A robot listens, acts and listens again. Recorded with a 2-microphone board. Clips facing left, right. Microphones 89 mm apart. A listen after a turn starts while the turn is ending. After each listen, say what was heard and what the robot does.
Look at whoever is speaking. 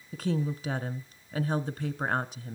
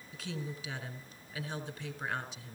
The woman speaking: about 50° left or 130° left. Turn 50° left.
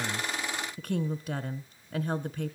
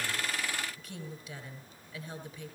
So it is at 70° left. Turn 70° left.
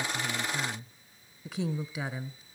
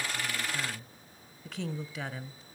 The woman speaking is now 10° left. Turn 10° left.
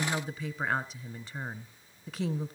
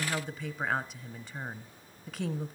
Found it: a woman speaking, straight ahead, 1 to 2 m away.